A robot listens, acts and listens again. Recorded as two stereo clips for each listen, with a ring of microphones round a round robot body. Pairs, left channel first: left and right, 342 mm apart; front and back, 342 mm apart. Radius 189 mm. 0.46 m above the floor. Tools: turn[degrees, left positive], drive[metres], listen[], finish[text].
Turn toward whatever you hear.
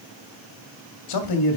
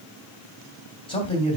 Thought: The man speaking: 75° left.
Action: turn[75]
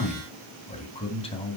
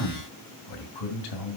Thought: The man speaking is now 15° left.
Action: turn[15]
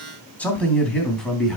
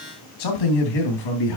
Action: finish[Facing the man speaking, 2 to 4 m away.]